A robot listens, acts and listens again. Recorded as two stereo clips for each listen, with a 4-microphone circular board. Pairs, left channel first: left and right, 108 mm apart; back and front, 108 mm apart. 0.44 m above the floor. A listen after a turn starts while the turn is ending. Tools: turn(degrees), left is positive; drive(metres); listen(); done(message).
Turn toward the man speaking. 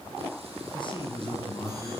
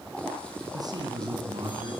turn(degrees=50)
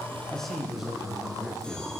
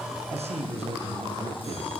done("Facing the man speaking.")